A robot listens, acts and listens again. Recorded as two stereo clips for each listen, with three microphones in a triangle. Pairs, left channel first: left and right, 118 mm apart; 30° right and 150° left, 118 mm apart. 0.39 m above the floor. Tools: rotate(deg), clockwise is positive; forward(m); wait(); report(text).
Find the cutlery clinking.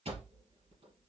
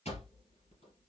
wait()
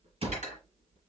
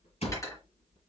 rotate(95)
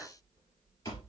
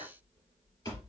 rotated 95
wait()
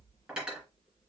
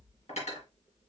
rotate(10)
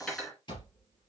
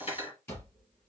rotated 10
report("Facing the cutlery clinking, 2 to 4 m away.")